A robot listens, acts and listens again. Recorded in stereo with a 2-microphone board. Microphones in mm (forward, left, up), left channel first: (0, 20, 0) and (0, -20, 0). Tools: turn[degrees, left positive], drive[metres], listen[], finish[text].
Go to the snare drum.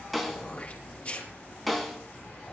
Action: turn[30]
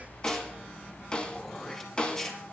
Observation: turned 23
Thought: So it is at 150° left.
Action: turn[150]
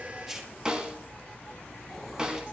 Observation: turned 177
Thought: The snare drum is now 25° right.
Action: turn[-25]
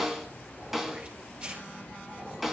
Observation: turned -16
Thought: The snare drum is now 10° right.
Action: turn[-10]
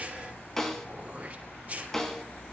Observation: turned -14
Action: drive[1.0]
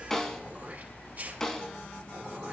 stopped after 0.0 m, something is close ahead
Action: finish[Something is in my way. I am facing the snare drum but have not reached it.]